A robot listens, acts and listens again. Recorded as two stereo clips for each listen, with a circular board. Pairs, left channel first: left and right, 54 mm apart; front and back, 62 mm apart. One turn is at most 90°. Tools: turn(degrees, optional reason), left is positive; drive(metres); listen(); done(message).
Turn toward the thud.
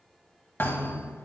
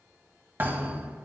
turn(degrees=90, reason="The thud: 130° left.")
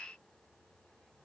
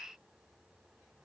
turn(degrees=40, reason="Nothing new. It was at 40° left.")
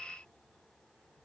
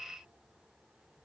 done("I heard a thud from this way, but can't make it out now.")